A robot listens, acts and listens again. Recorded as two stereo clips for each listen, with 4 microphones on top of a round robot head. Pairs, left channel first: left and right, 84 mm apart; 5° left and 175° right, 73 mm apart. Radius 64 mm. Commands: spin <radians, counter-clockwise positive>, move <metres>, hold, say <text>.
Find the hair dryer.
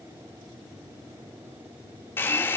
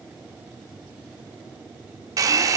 spin 2.71
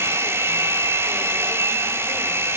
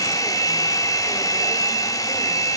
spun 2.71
spin -0.61
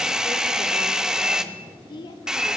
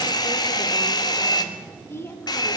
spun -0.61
spin -0.17
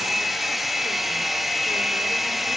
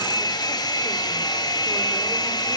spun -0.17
say Found it: a hair dryer, straight ahead, 1 to 2 m away.